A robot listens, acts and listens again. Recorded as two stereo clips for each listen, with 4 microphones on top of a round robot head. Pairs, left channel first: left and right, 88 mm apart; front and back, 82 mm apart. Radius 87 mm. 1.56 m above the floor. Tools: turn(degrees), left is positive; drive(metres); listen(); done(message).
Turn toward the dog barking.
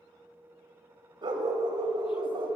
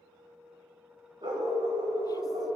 turn(degrees=-125)
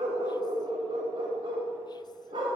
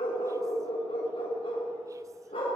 turn(degrees=-40)
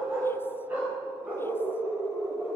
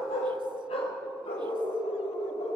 turn(degrees=-15)
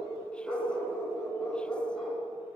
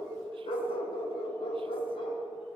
done("Facing the dog barking.")